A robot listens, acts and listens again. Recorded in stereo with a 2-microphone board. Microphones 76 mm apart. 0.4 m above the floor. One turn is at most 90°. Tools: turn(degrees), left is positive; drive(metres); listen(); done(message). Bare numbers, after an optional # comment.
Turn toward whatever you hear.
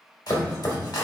# The chopping: about 60° left or 120° left.
turn(60)
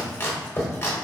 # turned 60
# So it is at 40° left.
turn(40)
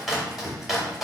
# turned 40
done("Facing the chopping, under 1 m away.")